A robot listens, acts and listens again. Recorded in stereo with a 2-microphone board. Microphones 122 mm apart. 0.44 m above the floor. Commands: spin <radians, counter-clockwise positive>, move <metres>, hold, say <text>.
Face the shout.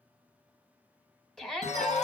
spin 0.52
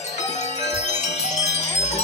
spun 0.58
hold
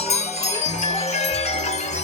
hold
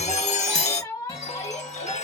spin 2.53
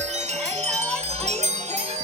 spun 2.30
spin 0.17
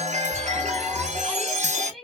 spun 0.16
say Facing the shout, 1 to 2 m away.